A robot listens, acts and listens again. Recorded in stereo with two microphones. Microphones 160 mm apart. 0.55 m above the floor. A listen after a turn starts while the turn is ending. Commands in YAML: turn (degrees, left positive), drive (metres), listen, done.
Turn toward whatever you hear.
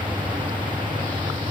listen: true
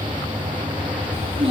turn: -40
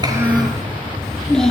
done: "Facing the child speaking."